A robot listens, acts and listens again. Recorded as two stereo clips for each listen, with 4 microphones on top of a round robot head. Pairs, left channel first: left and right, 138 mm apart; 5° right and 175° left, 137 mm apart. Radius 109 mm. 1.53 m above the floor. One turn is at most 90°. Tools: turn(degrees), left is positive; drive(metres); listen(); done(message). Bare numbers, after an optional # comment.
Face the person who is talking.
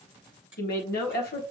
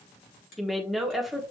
# The woman speaking: 85° left.
turn(85)
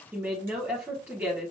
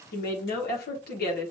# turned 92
# The woman speaking is now 10° right.
turn(-10)
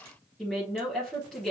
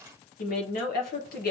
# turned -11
done("Facing the woman speaking.")